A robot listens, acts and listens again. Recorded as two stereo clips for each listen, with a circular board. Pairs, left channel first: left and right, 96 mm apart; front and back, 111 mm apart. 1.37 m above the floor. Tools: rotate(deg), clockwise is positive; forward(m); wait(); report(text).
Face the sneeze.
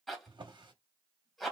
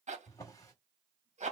wait()
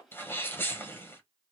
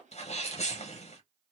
rotate(-20)
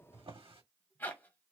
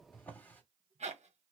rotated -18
report("Facing where the sneeze came from. I can't hear it now.")